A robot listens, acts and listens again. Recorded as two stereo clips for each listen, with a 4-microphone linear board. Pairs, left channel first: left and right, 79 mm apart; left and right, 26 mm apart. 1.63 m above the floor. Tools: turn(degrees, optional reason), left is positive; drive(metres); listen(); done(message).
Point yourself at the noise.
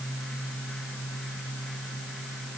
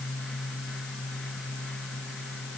listen()
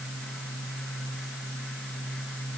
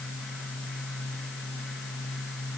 listen()
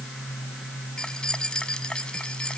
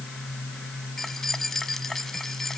turn(degrees=30)
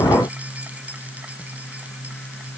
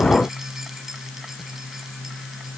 listen()
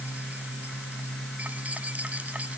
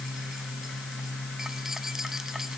listen()
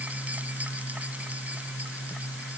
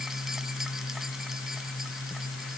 done("I heard keys jangling, but can't make it out now. It was about 20° right or 140° left.")